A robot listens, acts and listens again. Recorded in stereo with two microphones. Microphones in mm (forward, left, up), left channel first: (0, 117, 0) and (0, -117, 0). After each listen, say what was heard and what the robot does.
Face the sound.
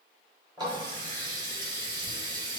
The running tap: about 15° right or 165° right. Turn 15° right.
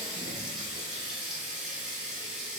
Found it: a running tap, straight ahead, 1 to 2 m away.